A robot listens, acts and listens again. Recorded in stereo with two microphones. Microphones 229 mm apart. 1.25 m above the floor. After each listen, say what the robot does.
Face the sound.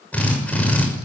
Turn 30° left.
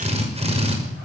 Turn 25° right.
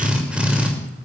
Found it: a drill, straight ahead.